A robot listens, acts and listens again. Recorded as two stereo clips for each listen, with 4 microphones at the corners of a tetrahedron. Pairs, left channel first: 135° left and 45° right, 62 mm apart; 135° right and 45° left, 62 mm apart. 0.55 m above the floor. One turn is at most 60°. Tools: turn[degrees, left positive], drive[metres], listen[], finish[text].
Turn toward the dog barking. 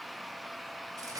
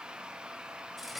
Action: listen[]
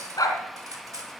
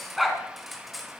Thought: The dog barking: 135° left.
Action: turn[60]
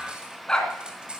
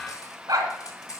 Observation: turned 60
Thought: The dog barking is now 55° left.
Action: turn[55]
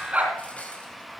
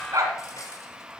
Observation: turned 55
Thought: The dog barking is now 20° left.
Action: turn[20]
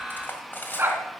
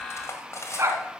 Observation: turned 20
Action: finish[Found it: a dog barking, straight ahead.]